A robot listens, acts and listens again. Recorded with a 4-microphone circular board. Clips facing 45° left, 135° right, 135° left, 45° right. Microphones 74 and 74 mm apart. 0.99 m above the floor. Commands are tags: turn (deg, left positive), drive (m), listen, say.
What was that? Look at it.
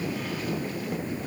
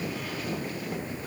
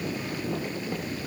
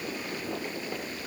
<listen/>
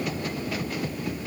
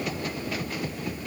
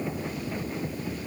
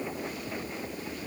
<listen/>
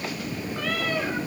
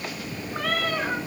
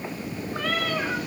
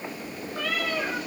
<turn deg="180"/>
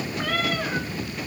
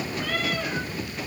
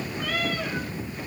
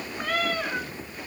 <say>Found it: a cat meowing, straight ahead.</say>